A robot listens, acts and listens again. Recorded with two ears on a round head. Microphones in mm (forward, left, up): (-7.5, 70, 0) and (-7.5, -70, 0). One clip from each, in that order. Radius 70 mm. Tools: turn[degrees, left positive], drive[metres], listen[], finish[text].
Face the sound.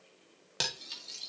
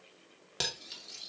Action: turn[30]
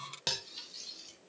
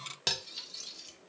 Thought: So it is at 15° right.
Action: turn[-15]
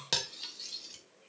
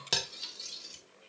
Action: finish[Facing the cutlery clinking, 1 to 2 m away.]